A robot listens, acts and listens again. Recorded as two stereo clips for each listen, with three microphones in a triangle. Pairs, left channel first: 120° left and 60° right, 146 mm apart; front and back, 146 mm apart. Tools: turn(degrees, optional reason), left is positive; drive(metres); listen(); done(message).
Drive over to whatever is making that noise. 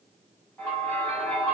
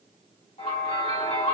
turn(degrees=40, reason="The bell: 40° left.")
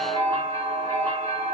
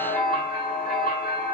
drive(metres=1.0)
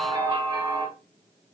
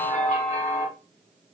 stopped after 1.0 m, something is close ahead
done("Arrived at the bell, straight ahead.")